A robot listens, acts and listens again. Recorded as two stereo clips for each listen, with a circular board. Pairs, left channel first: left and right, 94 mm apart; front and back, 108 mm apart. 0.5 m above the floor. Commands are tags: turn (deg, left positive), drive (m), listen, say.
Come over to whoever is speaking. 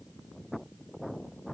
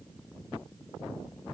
<listen/>
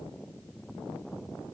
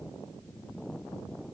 <listen/>
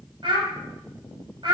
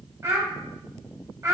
<turn deg="-120"/>
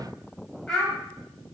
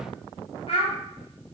<turn deg="10"/>
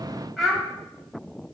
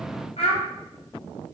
<drive m="1.0"/>
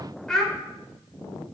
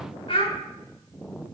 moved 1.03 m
<turn deg="10"/>
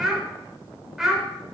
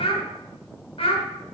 <drive m="1.0"/>
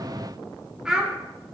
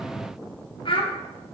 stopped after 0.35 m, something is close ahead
<turn deg="-10"/>
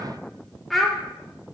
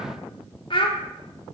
<say>Arrived at the child speaking, straight ahead.</say>